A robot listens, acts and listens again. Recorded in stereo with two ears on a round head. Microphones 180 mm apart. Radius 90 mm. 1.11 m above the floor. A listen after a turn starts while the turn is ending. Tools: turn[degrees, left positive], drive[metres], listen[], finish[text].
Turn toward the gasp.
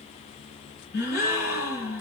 Thought: The gasp: about 70° left or 110° left.
Action: turn[70]
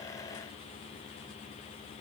Action: listen[]
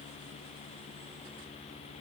Action: finish[I heard a gasp, but can't make it out now. It was about straight ahead or 40° left.]